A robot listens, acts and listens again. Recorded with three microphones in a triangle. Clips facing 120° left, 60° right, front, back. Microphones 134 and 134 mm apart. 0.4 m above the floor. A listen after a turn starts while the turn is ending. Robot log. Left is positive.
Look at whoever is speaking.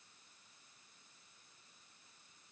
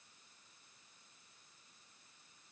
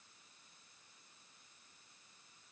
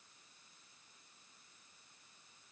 cmd idle
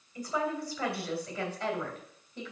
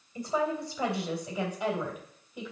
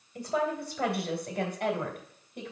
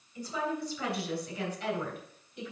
note: The woman speaking: 20° left.
cmd yaw +20
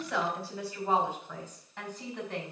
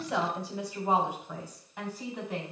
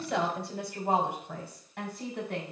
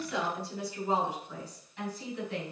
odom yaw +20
note: The woman speaking is now 20° left.
cmd yaw +20
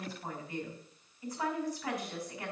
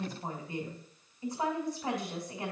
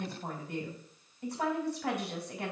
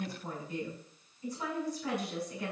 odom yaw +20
end: Facing the woman speaking.